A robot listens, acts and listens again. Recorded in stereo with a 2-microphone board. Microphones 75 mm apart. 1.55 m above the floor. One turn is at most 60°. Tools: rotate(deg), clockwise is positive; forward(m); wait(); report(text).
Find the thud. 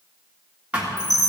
rotate(15)
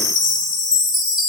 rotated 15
wait()
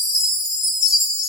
report("I heard a thud, but can't make it out now. It was about straight ahead or 150° right.")